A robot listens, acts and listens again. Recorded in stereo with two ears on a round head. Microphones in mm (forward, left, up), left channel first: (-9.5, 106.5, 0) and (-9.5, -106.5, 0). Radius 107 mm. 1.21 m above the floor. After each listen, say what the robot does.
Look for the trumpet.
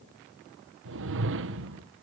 Keep listening.
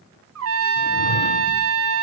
Turn 60° right.
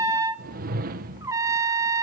Turn 15° right.
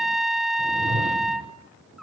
Found it: a trumpet, straight ahead.